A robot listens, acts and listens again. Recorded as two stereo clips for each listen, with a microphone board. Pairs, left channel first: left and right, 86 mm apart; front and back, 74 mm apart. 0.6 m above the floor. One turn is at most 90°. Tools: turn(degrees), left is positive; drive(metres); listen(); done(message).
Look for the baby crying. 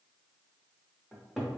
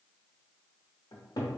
listen()
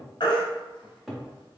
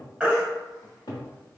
turn(degrees=90)
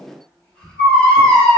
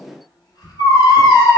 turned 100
done("Found it: a baby crying, straight ahead, 1 to 2 m away.")